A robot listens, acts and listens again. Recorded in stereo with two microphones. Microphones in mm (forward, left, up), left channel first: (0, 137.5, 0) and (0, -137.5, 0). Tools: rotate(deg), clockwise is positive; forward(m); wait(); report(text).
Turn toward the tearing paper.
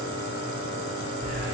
wait()
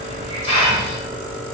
wait()
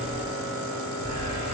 report("I can't make out tearing paper to turn to.")